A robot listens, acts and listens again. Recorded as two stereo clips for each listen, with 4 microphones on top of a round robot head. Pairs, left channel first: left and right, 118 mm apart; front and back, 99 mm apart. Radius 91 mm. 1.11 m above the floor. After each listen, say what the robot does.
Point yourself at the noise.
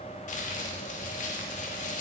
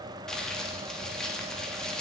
Turn 85° left.
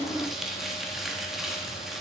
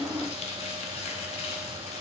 Facing the crumpling, 1 to 2 m away.